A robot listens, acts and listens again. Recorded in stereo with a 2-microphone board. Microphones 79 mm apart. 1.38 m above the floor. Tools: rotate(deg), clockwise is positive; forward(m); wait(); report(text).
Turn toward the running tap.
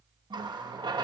rotate(70)
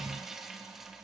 report("Found it: a running tap, straight ahead.")